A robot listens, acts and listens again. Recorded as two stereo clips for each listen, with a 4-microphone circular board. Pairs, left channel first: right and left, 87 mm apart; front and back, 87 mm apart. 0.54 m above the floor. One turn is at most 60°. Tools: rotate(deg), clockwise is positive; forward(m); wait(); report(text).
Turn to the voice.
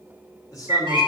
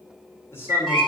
rotate(55)
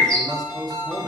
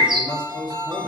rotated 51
report("Facing the man speaking.")